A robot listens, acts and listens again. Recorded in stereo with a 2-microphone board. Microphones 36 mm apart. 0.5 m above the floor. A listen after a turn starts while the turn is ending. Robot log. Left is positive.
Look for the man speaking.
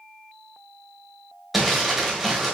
cmd idle
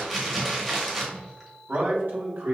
note: The man speaking: about 65° right or 115° right.
cmd yaw -65
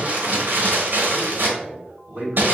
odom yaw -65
note: So it is at 50° right.
cmd yaw -50
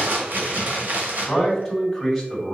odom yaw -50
end: Found it: a man speaking, straight ahead, 2 to 4 m away.